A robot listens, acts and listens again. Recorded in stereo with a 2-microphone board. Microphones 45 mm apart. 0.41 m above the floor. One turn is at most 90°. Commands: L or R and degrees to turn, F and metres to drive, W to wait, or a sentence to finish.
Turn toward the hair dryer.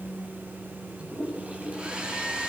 R30
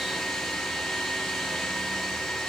Found it: a hair dryer, straight ahead, over 4 m away.